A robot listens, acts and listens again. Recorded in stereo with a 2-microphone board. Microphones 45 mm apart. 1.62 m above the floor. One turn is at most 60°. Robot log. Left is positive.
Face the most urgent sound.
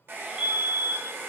note: The fire alarm: about 30° right or 150° right.
cmd yaw -30
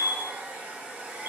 note: So it is at 110° right.
cmd yaw -60
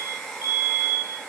note: The fire alarm is now 70° right.
cmd yaw -60
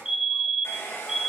note: The fire alarm is now 10° right.
cmd yaw -10
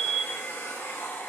end: Facing the fire alarm, 1 to 2 m away.